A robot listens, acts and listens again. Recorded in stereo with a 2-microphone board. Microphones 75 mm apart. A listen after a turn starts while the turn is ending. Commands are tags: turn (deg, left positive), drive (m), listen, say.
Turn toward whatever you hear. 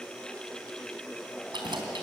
<turn deg="-90"/>
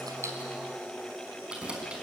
<turn deg="-15"/>
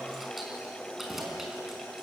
<say>Found it: keys jangling, straight ahead.</say>